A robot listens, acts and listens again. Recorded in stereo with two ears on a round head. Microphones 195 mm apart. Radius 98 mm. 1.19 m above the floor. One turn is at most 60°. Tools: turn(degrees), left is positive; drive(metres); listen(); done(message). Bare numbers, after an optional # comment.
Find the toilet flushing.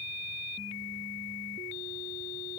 listen()
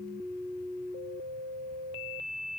listen()
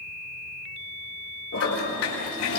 turn(60)
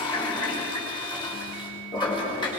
# So it is at 25° left.
turn(25)
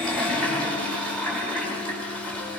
done("Facing the toilet flushing.")